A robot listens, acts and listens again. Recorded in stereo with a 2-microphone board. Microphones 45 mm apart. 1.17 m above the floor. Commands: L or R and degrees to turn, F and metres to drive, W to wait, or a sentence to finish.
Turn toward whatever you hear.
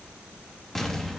L30
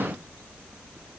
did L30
W
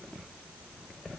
I heard an explosion, but can't make it out now. It was about 20° right or 140° left.